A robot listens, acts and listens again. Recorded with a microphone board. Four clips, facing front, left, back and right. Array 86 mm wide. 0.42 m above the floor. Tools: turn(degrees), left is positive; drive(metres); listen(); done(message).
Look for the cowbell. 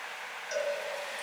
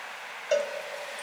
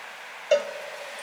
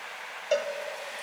turn(degrees=180)
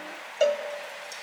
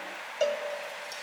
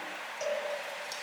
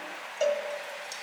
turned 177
done("Facing the cowbell.")